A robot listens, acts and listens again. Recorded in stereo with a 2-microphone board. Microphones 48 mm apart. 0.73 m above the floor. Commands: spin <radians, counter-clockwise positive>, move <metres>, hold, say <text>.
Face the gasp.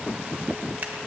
hold
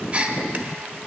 spin -0.44
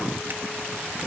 hold
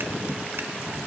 say I heard a gasp, but can't make it out now. It was about straight ahead or 130° right.